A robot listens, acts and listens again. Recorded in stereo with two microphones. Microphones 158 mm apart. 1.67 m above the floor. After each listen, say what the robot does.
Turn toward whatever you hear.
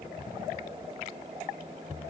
Keep listening.
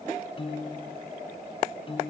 Turn 35° left.
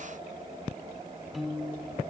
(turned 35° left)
Found it: a piano, straight ahead.